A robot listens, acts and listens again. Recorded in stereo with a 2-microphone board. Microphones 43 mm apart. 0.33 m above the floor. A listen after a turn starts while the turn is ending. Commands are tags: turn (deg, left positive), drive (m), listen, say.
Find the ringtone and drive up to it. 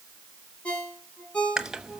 <turn deg="30"/>
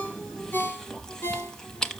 <turn deg="125"/>
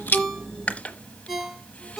<turn deg="-10"/>
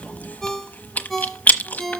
<drive m="1.0"/>
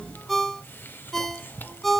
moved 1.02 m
<drive m="1.0"/>
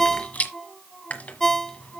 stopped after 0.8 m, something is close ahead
<say>Arrived at the ringtone, straight ahead.</say>